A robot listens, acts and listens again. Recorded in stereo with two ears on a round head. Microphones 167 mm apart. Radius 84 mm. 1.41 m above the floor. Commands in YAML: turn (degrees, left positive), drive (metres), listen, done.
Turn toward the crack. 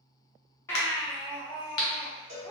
turn: 60
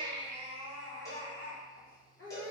listen: true
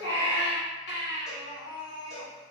done: "I heard a crack, but can't make it out now. It was about straight ahead or 60° left."